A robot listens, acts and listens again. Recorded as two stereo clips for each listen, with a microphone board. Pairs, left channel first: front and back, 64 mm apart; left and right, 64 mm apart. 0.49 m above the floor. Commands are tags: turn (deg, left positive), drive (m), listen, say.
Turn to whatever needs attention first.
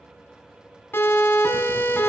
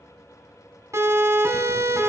<turn deg="-55"/>
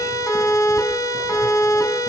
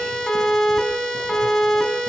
<turn deg="10"/>
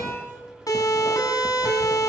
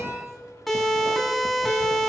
<say>Found it: a siren, straight ahead.</say>